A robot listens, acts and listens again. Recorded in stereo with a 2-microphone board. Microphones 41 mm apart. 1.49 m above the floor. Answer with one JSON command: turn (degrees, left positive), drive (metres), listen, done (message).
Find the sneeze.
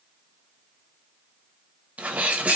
{"turn": -35}
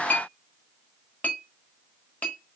{"listen": true}
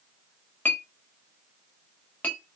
{"done": "I heard a sneeze, but can't make it out now. It was about straight ahead or 110° right."}